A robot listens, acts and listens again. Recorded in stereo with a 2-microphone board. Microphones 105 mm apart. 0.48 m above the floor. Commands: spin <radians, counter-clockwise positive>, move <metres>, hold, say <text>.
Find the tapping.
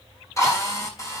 hold
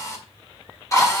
hold
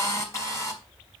say I can't make out tapping, only a drill.